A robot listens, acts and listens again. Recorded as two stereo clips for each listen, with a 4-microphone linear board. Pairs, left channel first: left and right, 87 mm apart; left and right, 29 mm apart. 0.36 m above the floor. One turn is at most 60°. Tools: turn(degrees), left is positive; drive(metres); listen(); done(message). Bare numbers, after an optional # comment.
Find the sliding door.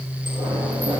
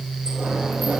listen()
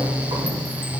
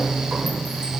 listen()
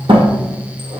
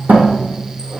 turn(-60)
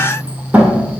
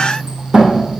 # So it is at 15° right.
turn(-15)
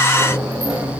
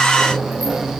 done("Facing the sliding door, 2 to 4 m away.")